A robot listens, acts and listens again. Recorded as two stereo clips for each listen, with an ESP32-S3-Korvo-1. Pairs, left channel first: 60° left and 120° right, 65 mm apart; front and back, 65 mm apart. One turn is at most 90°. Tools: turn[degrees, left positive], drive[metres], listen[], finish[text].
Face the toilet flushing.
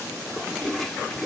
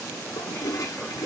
Thought: The toilet flushing: 25° right.
Action: turn[-25]
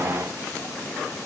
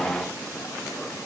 Action: listen[]
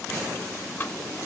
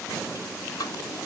Action: finish[Found it: a toilet flushing, straight ahead.]